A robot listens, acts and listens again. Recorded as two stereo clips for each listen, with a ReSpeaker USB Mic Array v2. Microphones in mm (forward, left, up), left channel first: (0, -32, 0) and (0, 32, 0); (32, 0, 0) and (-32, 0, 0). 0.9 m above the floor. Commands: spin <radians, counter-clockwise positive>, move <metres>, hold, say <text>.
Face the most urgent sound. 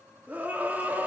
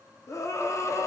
spin 0.52
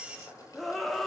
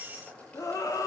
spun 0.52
say Found it: a scream, straight ahead.